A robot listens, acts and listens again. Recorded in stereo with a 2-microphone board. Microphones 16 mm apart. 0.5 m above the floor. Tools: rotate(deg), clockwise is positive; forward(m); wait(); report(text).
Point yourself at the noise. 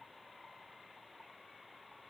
wait()
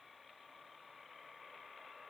wait()
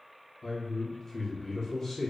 rotate(-20)
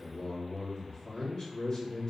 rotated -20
rotate(-135)
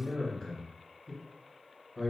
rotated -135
rotate(-50)
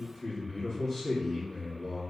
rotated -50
rotate(-25)
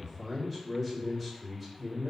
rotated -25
rotate(-10)
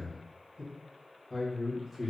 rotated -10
report("Found it: a man speaking, straight ahead.")